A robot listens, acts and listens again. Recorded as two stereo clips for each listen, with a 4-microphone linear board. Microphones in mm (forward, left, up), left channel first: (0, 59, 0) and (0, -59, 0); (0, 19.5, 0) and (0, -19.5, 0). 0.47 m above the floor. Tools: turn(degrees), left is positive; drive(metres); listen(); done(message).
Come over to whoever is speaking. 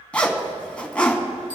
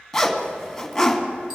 listen()
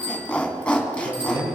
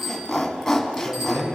turn(degrees=-65)
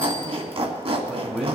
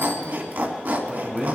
drive(metres=1.0)
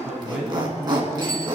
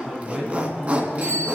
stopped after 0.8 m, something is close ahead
done("Something is in my way. I am facing the man speaking but have not reached it.")